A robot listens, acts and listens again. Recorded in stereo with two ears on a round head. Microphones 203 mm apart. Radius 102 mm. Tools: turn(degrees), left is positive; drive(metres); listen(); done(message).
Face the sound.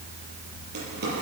turn(degrees=-45)
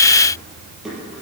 done("Facing the drawer, over 4 m away.")